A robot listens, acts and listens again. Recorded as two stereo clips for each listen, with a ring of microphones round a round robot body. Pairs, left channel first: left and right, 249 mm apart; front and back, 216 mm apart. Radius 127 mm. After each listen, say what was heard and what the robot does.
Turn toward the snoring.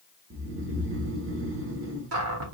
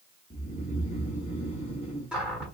The snoring: 60° right. Turn 60° right.
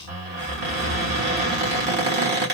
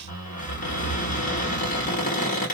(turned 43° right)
The snoring is now 20° right. Turn 20° right.
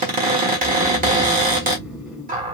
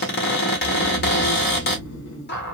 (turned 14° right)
Found it: snoring, straight ahead, 1 to 2 m away.